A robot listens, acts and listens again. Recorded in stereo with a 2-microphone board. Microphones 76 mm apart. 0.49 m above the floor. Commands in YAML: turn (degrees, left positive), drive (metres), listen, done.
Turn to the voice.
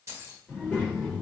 turn: 25
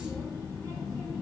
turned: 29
turn: 125
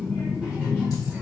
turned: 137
turn: -15
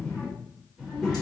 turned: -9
done: "Facing the child speaking."